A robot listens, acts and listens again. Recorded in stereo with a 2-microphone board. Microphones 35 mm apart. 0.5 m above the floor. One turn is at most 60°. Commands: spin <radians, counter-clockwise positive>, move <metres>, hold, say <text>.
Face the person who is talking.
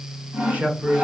spin -0.96
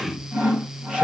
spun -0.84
spin -0.52
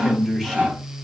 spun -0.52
say Found it: a man speaking, straight ahead, 1 to 2 m away.